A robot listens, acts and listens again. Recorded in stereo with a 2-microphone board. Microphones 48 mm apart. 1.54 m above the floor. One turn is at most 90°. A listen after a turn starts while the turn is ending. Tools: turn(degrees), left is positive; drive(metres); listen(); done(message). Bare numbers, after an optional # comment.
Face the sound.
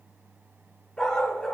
turn(30)
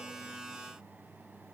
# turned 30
# So it is at 25° right.
turn(-25)
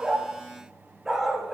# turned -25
# The dog barking is now 15° right.
turn(-15)
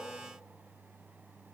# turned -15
listen()
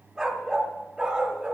# The dog barking is now 25° right.
turn(-25)
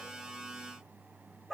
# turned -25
done("Facing the dog barking, 2 to 4 m away.")